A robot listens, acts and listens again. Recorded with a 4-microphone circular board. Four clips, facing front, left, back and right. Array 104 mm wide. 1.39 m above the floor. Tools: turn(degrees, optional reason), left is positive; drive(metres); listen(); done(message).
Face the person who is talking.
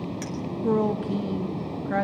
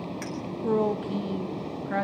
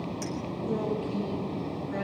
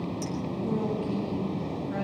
turn(degrees=35, reason="The woman speaking: 35° left.")
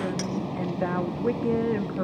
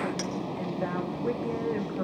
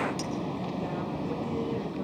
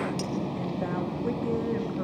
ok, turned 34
done("Facing the woman speaking.")